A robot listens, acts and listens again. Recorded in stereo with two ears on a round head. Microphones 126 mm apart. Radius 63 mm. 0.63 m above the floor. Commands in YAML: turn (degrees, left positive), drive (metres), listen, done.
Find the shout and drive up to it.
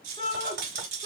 turn: 40
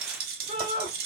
turn: 90
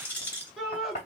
drive: 1.0
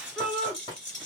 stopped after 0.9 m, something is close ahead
done: "I am next to the shout."